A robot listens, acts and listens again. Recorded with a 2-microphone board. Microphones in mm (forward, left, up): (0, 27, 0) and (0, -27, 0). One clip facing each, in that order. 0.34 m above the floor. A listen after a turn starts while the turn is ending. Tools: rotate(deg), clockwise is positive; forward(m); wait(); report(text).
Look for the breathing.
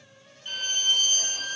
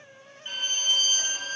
wait()
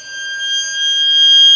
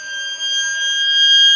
wait()
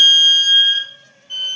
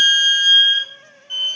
report("I can't make out breathing to turn to.")